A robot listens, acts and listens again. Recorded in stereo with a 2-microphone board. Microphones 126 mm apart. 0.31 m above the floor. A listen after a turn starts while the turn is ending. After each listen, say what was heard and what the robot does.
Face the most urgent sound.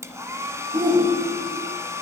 The shout: about 40° right or 140° right. Turn 40° right.
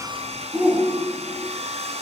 So it is at 10° right. Turn 10° right.
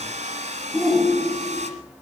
Facing the shout.